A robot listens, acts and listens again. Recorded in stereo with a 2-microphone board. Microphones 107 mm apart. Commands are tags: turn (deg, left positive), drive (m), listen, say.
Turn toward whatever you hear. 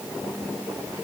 <listen/>
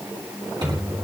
<turn deg="-35"/>
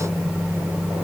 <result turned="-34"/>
<say>Found it: a microwave, straight ahead.</say>